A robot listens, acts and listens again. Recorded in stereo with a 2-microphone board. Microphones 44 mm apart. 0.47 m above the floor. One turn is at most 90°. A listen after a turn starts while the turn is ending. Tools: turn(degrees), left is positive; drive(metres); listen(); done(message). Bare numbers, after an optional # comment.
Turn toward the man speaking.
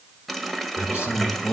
# The man speaking: about 70° left or 110° left.
turn(70)
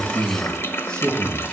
# So it is at 20° left.
turn(20)
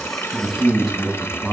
done("Facing the man speaking.")